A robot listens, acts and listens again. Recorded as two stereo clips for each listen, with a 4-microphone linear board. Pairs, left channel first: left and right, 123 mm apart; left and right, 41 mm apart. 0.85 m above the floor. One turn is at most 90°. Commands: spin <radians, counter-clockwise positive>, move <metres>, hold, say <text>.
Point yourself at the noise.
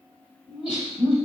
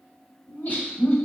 spin 0.87
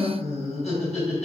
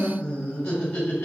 spin 1.31
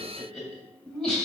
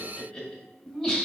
spin 0.17
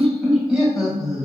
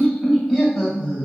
say Facing the laughter, 1 to 2 m away.